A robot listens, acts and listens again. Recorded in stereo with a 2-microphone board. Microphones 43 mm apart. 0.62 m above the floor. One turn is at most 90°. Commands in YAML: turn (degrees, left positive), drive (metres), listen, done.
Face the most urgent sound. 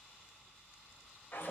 listen: true
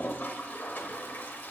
listen: true
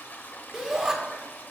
turn: -30
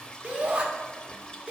turn: -90
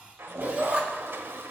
turn: -55
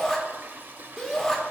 done: "Facing the shout, 1 to 2 m away."